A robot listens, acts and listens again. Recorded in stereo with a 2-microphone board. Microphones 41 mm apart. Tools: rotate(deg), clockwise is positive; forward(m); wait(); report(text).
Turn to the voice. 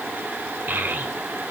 rotate(55)
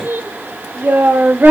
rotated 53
rotate(70)
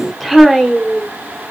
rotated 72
report("Found it: a child speaking, straight ahead, 1 to 2 m away.")